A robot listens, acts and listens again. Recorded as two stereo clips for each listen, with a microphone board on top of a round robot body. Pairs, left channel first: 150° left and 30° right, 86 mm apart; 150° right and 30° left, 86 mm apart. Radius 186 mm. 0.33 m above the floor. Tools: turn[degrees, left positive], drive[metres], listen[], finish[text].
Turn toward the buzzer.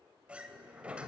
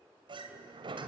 Action: listen[]
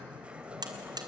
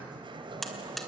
Thought: The buzzer: 65° right.
Action: turn[-65]
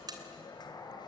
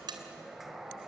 Action: finish[Facing the buzzer, 2 to 4 m away.]